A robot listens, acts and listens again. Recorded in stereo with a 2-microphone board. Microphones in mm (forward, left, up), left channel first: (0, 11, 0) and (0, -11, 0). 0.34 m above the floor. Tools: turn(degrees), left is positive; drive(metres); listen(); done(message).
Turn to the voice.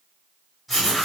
listen()
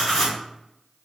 listen()
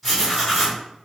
done("I can't make out anyone speaking, only writing.")